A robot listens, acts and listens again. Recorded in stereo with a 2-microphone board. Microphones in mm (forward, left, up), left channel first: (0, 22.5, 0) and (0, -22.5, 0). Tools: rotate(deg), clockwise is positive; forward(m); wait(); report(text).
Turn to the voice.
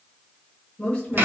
rotate(-25)
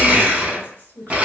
rotate(-125)
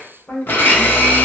rotate(-45)
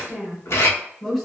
report("Found it: a woman speaking, straight ahead.")